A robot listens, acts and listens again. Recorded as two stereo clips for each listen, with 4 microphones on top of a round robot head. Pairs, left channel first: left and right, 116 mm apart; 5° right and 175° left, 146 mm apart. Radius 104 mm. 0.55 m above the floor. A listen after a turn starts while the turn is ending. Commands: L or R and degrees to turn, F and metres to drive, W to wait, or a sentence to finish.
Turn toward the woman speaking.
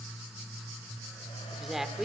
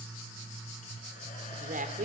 R175
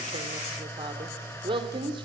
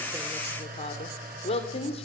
R50
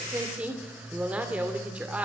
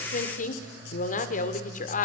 R10
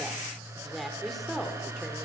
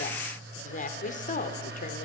Facing the woman speaking, 2 to 4 m away.